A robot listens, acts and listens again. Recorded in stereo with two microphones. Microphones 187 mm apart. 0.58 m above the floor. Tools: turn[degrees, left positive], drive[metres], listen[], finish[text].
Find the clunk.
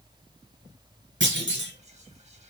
Action: turn[-90]
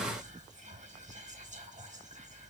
Action: finish[I heard a clunk from this way, but can't make it out now.]